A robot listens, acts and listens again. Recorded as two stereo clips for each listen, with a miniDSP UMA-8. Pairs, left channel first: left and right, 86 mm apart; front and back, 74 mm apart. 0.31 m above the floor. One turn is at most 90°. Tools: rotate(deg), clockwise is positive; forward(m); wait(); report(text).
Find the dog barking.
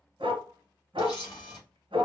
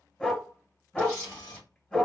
rotate(80)
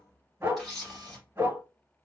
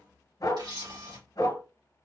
rotate(25)
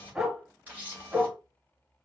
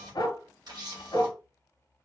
report("Facing the dog barking, 1 to 2 m away.")